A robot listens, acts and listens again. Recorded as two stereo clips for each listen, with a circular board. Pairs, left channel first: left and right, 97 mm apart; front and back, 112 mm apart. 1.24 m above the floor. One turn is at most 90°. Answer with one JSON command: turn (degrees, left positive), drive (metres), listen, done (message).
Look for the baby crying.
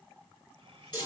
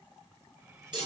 {"listen": true}
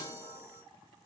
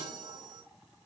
{"listen": true}
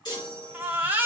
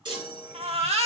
{"turn": -90}
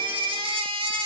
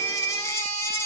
{"turn": -60}
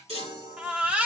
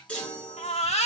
{"turn": -15}
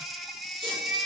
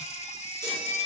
{"done": "Facing the baby crying, 1 to 2 m away."}